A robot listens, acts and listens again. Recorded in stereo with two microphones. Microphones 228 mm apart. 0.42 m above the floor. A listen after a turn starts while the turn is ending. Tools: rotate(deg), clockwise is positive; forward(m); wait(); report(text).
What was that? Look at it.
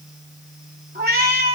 rotate(40)
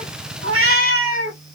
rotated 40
rotate(115)
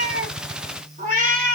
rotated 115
rotate(40)
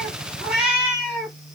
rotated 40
report("Facing the cat meowing, 2 to 4 m away.")